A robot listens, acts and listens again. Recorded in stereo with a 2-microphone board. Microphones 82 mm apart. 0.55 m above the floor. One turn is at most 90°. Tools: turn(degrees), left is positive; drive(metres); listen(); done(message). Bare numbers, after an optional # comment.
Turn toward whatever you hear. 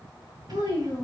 # The child speaking: about 55° right or 125° right.
turn(-55)
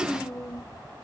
# So it is at 10° left.
turn(10)
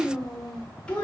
# The child speaking is now 15° left.
turn(15)
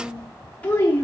# The child speaking is now 30° left.
turn(30)
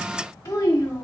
# The child speaking is now 35° left.
turn(35)
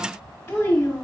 # The child speaking is now 20° left.
turn(20)
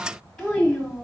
done("Facing the child speaking, 1 to 2 m away.")